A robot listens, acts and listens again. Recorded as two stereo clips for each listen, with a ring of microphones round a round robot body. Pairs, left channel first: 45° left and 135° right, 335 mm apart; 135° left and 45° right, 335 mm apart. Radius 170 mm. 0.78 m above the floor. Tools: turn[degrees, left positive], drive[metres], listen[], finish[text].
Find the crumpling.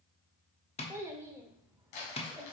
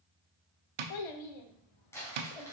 Thought: The crumpling: 50° left.
Action: turn[50]
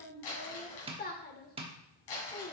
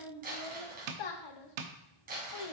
Thought: The crumpling is now 20° left.
Action: turn[20]
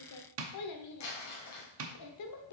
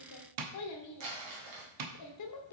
Action: finish[Facing the crumpling, 2 to 4 m away.]